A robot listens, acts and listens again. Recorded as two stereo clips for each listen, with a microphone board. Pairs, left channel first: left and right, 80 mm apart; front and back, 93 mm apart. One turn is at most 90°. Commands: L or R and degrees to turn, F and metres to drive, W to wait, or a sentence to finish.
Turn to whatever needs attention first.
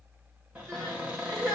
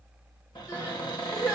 R50
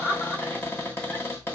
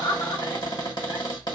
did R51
Found it: crying, straight ahead, 1 to 2 m away.